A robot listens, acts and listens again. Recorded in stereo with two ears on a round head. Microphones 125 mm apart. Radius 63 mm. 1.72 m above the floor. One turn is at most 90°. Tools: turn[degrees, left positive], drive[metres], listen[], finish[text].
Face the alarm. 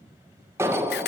Thought: The alarm: about 20° right or 160° right.
Action: turn[-20]
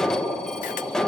Action: finish[Found it: an alarm, straight ahead.]